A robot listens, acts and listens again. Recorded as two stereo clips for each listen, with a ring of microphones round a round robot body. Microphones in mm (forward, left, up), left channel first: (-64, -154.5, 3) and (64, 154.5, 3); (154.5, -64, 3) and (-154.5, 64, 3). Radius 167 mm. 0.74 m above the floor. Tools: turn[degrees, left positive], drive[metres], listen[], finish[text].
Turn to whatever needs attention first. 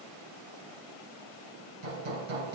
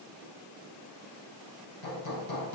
Action: listen[]
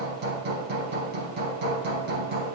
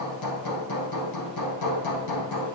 Action: listen[]
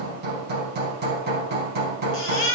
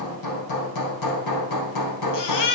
Thought: The baby crying: 60° right.
Action: turn[-60]
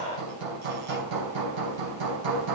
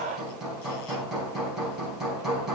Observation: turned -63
Action: listen[]
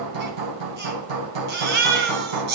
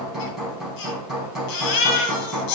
Action: finish[Facing the baby crying.]